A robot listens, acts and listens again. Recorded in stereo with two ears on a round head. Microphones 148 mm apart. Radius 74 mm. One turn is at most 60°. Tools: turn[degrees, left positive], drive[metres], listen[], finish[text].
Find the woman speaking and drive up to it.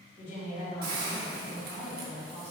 Thought: The woman speaking: about 40° left or 140° left.
Action: turn[40]
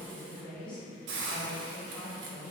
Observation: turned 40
Thought: So it is at 10° left.
Action: turn[10]
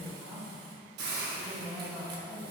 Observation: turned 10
Action: drive[1.0]
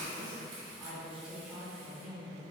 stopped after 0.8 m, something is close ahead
Action: finish[Arrived at the woman speaking, straight ahead.]